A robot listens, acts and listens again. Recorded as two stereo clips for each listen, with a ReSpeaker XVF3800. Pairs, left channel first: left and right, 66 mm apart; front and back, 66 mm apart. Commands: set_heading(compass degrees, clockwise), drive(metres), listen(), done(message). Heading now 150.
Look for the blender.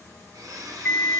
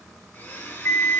set_heading(210)
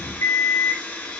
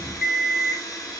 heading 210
set_heading(195)
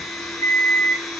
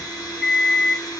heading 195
done("Found it: a blender, straight ahead, under 1 m away.")